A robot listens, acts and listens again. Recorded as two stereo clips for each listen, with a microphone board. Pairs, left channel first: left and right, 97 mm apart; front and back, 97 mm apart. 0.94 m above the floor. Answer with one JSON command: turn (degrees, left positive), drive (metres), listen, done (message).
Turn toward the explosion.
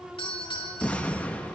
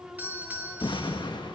{"turn": 20}
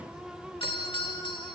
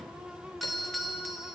{"done": "I heard an explosion from this way, but can't make it out now."}